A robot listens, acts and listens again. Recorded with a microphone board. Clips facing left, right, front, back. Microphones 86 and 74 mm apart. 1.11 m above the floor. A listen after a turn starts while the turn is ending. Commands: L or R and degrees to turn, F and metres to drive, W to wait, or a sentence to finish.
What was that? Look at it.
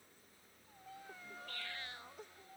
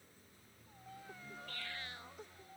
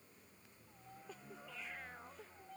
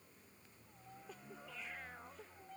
W
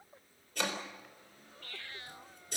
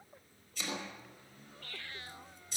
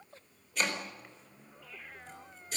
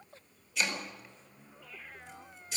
L50
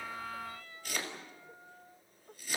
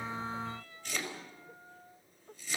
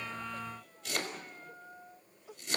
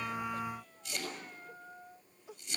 Found it: chopping, straight ahead.